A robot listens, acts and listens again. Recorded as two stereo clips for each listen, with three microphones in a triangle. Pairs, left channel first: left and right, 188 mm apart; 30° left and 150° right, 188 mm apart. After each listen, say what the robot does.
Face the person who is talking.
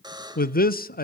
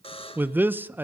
Turn 130° left.
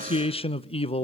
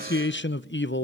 Turn 35° left.
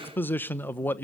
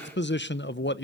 Turn 10° left.
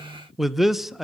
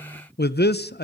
Facing the man speaking, under 1 m away.